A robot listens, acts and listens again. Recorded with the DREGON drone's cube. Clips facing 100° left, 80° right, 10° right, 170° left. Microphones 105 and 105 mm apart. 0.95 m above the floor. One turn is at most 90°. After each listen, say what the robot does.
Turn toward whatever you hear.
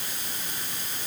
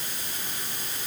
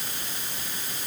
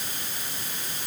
Keep listening.
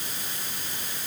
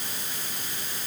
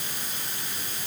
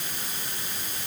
Keep listening.
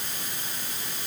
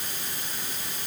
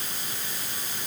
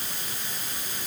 I can't make out anything to turn to.